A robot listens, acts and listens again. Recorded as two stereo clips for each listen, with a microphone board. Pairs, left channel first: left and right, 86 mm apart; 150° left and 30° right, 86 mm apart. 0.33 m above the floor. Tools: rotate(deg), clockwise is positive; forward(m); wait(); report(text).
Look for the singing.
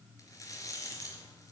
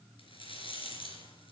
wait()
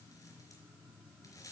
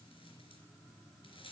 wait()
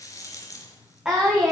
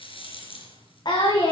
rotate(175)
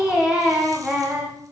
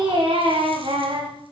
rotate(10)
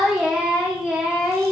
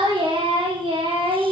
report("Facing the singing, over 4 m away.")